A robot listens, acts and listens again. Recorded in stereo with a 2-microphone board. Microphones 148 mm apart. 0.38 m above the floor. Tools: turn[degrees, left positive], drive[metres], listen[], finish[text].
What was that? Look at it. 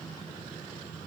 Action: listen[]
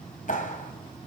Thought: The clap: about 60° left or 120° left.
Action: turn[60]
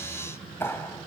Thought: So it is at 15° left.
Action: turn[15]
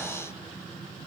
Action: listen[]
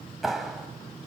Action: finish[Facing the clap.]